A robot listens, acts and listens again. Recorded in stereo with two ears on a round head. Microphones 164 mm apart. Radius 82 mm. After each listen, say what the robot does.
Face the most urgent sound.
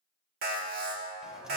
Turn 50° right.
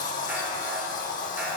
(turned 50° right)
Keep listening.
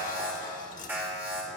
Turn 15° right.
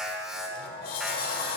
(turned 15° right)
Found it: an alarm, straight ahead.